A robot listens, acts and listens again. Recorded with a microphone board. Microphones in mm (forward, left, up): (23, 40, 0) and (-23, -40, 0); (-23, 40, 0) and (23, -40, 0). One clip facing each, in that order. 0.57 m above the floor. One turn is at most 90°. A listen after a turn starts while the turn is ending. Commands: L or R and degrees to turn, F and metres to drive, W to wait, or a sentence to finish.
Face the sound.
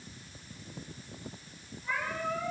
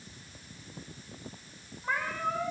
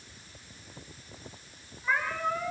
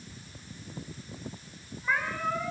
R90
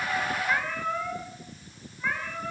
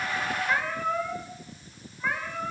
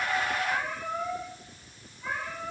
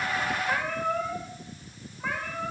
R40
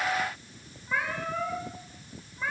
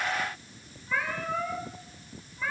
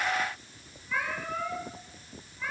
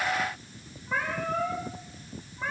R10
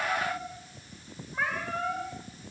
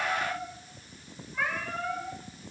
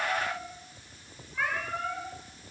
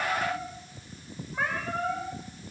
Found it: a cat meowing, straight ahead.